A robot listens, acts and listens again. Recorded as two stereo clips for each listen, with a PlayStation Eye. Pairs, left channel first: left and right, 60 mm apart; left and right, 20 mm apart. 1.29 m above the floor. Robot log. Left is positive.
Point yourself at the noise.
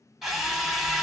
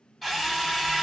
cmd yaw -30
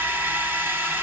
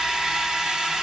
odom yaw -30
note: So it is at 145° right.
cmd yaw -145
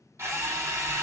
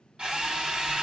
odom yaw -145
note: The drill is now 55° right.
cmd yaw -55
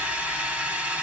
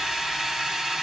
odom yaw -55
note: The drill is now 25° right.
cmd yaw -25
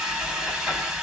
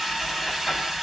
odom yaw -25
note: The drill is now 10° right.
cmd yaw -10
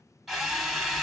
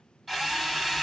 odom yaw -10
end: Found it: a drill, straight ahead, 1 to 2 m away.